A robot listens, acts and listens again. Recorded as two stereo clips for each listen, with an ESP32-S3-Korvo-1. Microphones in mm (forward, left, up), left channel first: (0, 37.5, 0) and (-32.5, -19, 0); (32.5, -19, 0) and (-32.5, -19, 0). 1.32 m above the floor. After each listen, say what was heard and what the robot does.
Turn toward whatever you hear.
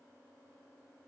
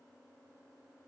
Keep listening.
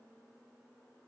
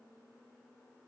Keep listening.
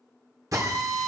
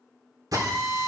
The drill: 155° right. Turn 155° right.
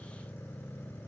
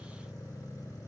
Keep listening.
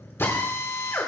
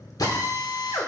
The drill is now 10° left. Turn 10° left.
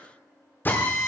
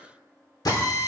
Facing the drill, 2 to 4 m away.